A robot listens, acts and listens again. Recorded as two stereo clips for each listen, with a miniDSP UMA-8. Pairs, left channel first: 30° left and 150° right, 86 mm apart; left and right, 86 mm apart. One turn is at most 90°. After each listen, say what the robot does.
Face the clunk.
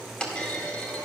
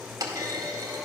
Turn 50° right.
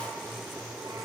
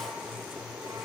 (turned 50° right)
I heard a clunk from this way, but can't make it out now.